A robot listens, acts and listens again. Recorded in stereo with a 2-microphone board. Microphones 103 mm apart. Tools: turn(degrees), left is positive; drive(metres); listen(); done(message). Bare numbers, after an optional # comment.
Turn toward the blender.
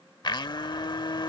# The blender: about 45° left or 135° left.
turn(45)
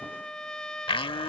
# So it is at 80° left.
turn(80)
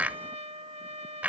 # The blender is now 20° right.
turn(-20)
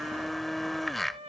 done("Found it: a blender, straight ahead.")